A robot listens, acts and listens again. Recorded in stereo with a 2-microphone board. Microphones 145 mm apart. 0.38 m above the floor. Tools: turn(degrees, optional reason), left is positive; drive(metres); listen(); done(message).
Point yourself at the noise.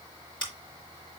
turn(degrees=35, reason="The scissors: about 35° left or 145° left.")
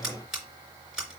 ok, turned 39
done("Found it: scissors, straight ahead, 2 to 4 m away.")